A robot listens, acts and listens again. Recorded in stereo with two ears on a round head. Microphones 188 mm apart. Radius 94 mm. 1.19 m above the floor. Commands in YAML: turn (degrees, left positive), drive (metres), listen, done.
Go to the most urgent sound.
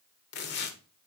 listen: true
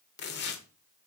listen: true
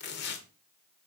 done: "I can't make out anything urgent to turn to."